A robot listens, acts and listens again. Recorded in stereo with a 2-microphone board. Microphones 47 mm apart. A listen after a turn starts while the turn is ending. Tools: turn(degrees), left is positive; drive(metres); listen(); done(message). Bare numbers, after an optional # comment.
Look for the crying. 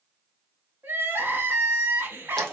# The crying: about 50° right or 130° right.
turn(-50)
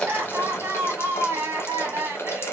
# So it is at 75° right.
turn(-75)
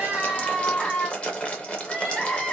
# The crying is now 15° left.
turn(15)
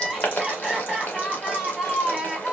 done("Found it: crying, straight ahead, under 1 m away.")